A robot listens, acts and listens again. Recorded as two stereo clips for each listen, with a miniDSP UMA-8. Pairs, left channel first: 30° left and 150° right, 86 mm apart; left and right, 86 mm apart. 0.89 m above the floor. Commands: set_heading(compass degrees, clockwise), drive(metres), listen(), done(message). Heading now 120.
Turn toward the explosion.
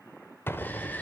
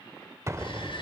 set_heading(155)
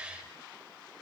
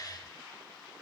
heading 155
done("Facing where the explosion came from. I can't hear it now.")